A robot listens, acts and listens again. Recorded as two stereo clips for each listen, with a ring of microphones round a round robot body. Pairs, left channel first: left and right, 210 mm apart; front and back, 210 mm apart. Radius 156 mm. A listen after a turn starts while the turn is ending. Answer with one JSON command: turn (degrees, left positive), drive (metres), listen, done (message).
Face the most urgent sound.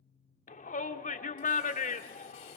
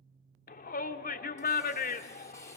{"turn": 40}
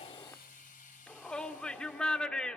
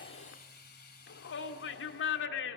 {"done": "Facing the shout, 1 to 2 m away."}